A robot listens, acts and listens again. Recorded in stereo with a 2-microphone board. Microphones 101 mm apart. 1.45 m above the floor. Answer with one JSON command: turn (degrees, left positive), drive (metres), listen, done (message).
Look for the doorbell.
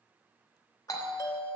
{"turn": 35}
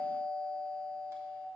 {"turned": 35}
{"done": "Facing the doorbell, 1 to 2 m away."}